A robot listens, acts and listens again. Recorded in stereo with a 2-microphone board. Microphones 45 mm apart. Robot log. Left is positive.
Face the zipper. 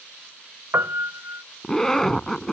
cmd yaw +30
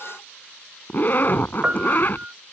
note: So it is at 140° left.
cmd yaw +140
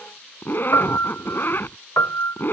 note: The zipper is now 45° left.
cmd yaw +45
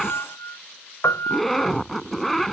end: Facing the zipper.